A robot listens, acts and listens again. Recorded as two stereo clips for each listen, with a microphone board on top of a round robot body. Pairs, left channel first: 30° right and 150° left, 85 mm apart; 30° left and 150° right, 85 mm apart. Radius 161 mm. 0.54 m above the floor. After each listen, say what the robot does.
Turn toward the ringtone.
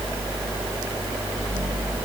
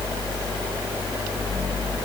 Keep listening.
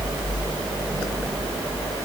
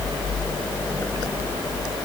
Keep listening.
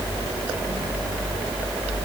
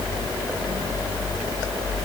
I can't make out a ringtone to turn to.